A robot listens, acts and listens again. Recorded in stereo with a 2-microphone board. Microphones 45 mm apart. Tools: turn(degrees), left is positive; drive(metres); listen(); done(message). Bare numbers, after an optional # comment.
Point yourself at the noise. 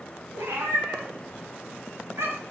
turn(-90)
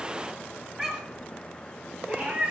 # So it is at 30° right.
turn(-30)
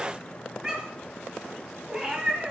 # The cat meowing is now 15° right.
turn(-15)
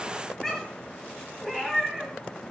done("Facing the cat meowing, 1 to 2 m away.")